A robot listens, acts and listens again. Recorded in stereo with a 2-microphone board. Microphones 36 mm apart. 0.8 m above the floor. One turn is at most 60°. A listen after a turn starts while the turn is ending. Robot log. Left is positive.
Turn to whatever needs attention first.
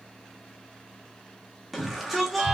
cmd yaw +30
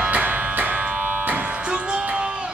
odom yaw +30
cmd idle
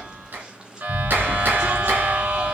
cmd idle
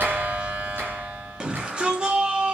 note: So it is at 30° right.
cmd yaw -30
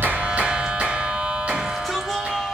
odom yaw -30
cmd idle
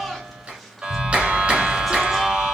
cmd idle
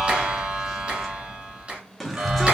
end: Found it: a shout, straight ahead.